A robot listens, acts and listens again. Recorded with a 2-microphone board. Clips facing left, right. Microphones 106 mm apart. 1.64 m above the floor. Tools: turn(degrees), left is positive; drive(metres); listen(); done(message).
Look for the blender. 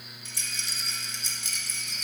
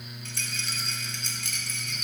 listen()
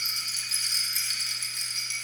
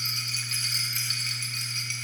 listen()
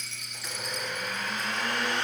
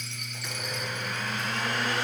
turn(degrees=30)
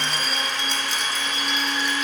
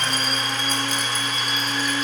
turn(degrees=-30)
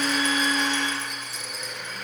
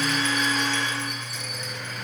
done("Facing the blender.")